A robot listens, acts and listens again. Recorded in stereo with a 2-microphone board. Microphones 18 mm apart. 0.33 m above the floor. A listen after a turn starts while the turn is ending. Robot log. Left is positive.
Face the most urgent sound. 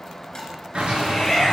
note: The shout: about 30° left or 150° left.
cmd yaw +30
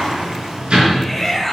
end: Facing the shout, 2 to 4 m away.